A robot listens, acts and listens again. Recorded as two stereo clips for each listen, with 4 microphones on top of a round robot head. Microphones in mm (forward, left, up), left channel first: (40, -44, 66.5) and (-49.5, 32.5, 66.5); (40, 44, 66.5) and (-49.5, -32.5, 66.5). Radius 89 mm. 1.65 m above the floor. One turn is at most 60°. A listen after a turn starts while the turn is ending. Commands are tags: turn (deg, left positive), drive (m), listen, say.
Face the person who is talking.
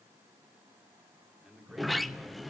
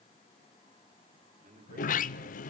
<turn deg="-60"/>
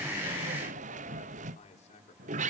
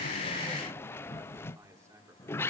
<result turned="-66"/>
<turn deg="-60"/>
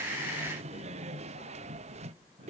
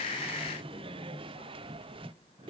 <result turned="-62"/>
<turn deg="-10"/>
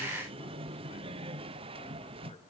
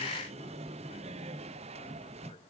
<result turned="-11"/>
<listen/>
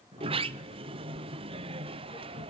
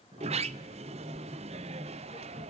<say>Facing where the man speaking came from. I can't hear it now.</say>